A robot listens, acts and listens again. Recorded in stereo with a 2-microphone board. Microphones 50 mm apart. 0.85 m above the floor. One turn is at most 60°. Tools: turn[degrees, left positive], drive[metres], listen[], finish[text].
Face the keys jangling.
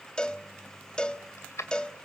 Action: turn[60]
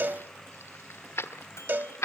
Thought: So it is at 75° left.
Action: turn[60]
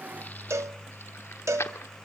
Thought: The keys jangling is now 70° left.
Action: turn[60]
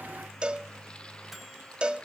Thought: Nothing new. It was at 10° left.
Action: turn[10]
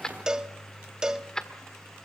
Thought: The keys jangling is now 15° left.
Action: turn[15]
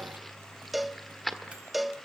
Action: finish[Found it: keys jangling, straight ahead.]